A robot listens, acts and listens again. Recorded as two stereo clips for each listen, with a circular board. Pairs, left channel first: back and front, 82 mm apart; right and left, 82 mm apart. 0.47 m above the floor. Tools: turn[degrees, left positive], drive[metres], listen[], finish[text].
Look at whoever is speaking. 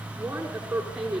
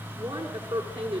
Thought: The woman speaking: 75° left.
Action: turn[75]
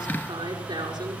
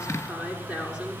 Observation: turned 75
Thought: The woman speaking is now 15° left.
Action: turn[15]
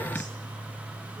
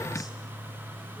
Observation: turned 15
Action: listen[]
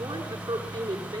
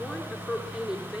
Action: finish[Facing the woman speaking, over 4 m away.]